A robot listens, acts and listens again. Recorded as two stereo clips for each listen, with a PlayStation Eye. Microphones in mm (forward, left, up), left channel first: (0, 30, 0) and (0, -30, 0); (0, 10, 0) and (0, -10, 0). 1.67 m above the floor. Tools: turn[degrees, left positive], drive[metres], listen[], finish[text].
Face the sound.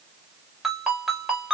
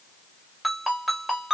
Action: turn[-30]
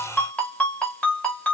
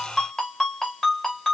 Thought: So it is at 25° left.
Action: turn[25]
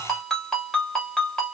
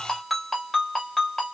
Thought: The ringtone is now 10° left.
Action: turn[10]
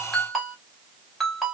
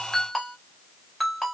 Action: finish[Found it: a ringtone, straight ahead.]